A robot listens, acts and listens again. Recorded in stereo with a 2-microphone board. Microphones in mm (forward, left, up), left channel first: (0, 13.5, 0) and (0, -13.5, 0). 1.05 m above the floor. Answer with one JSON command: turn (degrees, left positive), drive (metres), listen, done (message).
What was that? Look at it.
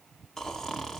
{"turn": 30}
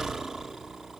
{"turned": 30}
{"turn": -20}
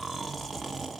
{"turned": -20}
{"done": "Found it: snoring, straight ahead."}